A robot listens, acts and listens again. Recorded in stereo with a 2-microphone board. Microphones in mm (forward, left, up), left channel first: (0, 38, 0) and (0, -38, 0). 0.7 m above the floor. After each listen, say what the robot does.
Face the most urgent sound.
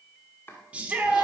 Turn 20° right.
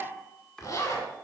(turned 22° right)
Keep listening.
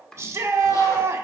Turn 140° right.
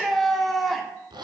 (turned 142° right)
Facing the shout.